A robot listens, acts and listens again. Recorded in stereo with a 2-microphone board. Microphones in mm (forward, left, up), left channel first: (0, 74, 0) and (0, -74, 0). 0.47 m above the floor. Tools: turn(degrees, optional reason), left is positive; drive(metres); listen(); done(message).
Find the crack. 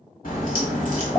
turn(degrees=90)
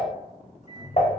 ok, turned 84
done("Facing where the crack came from. I can't hear it now.")